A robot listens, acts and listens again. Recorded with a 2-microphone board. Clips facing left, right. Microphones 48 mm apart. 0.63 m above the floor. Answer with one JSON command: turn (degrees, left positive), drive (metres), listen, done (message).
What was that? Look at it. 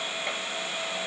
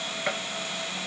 {"turn": -70}
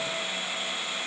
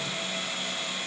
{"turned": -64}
{"listen": true}
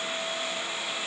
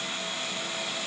{"done": "I heard a gunshot, but can't make it out now. It was about 5° right or 45° right."}